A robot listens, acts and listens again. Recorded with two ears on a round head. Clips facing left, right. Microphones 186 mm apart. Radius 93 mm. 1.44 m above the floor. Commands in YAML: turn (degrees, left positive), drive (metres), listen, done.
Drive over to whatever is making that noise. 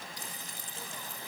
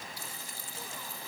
turn: 20
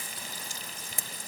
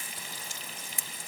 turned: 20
turn: 140
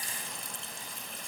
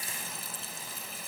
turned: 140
drive: 1.0
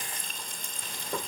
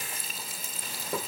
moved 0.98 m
drive: 1.0
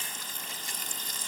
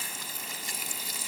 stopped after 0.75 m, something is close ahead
turn: -10
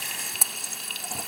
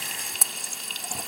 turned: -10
done: "Arrived at the frying, straight ahead."